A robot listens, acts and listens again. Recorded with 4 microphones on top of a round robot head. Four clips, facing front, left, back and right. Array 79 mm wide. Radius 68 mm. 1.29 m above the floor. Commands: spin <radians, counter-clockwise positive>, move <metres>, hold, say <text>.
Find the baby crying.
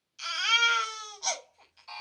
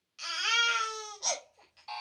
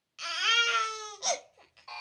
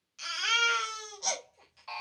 spin -2.97
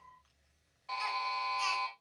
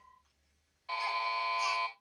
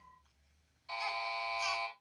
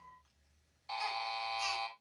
hold
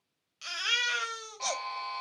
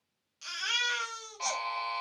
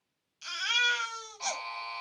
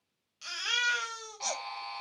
spin 0.17
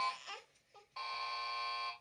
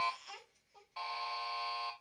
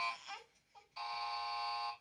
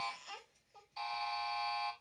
hold
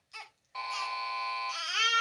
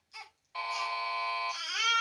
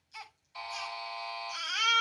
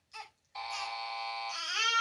say Facing the baby crying.